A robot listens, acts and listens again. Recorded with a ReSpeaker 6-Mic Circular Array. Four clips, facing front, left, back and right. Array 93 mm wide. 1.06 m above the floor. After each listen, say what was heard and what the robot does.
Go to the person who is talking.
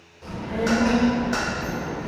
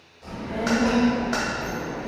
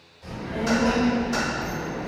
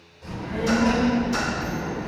Drive 1.0 m forward.
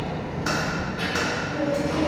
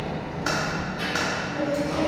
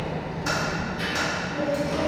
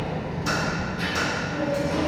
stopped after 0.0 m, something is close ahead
Something is in my way. I am facing the child speaking but have not reached it.